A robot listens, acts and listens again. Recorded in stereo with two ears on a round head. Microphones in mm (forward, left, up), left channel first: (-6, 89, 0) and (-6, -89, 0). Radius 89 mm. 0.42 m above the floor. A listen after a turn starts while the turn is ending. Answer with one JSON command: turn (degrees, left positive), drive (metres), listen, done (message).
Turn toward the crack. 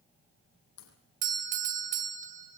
{"turn": 90}
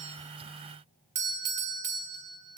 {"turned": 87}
{"done": "Facing where the crack came from. I can't hear it now."}